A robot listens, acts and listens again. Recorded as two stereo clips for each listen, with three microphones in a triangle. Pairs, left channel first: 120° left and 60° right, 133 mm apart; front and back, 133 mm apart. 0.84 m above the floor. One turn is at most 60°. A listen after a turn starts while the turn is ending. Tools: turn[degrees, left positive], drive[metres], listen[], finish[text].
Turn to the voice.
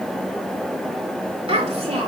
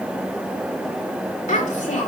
Thought: The child speaking: 25° right.
Action: turn[-25]
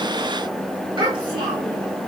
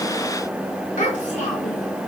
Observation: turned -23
Thought: The child speaking is now 10° right.
Action: turn[-10]
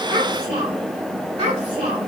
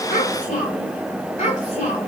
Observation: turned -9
Thought: The child speaking is now 20° right.
Action: turn[-20]
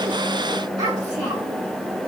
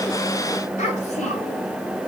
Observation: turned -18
Action: finish[Facing the child speaking.]